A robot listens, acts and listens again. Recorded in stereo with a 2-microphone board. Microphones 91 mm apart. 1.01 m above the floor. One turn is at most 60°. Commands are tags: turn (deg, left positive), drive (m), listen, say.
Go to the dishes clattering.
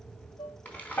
<turn deg="60"/>
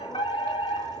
<listen/>
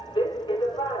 <listen/>
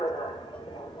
<say>I heard dishes clattering, but can't make it out now. It was about 10° left or 50° left. I did not reach it.</say>